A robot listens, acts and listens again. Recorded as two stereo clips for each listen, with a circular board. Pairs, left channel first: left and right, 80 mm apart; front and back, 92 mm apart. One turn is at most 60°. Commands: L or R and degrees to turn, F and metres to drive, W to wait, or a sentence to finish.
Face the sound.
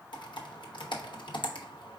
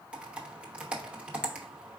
L60
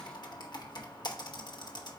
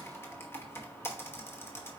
L60
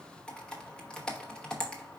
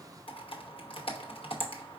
L10
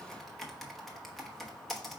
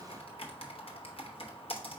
Facing the typing on a keyboard.